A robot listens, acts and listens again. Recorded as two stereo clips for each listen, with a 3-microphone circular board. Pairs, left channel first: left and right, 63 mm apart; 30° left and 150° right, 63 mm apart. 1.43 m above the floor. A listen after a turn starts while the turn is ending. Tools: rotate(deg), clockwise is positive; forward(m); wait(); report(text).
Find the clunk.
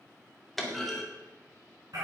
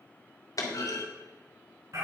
report("Facing the clunk, 2 to 4 m away.")